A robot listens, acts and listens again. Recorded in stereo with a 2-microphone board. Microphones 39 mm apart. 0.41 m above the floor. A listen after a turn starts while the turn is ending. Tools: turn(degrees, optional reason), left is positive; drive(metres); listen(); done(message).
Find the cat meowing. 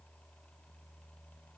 listen()
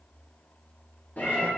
turn(degrees=45, reason="The cat meowing: about 45° left or 135° left.")
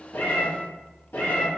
turn(degrees=105, reason="So it is at 105° left.")
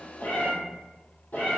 turn(degrees=45, reason="The cat meowing is now 45° left.")
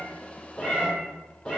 turn(degrees=20, reason="The cat meowing is now 20° left.")
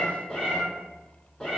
done("Facing the cat meowing.")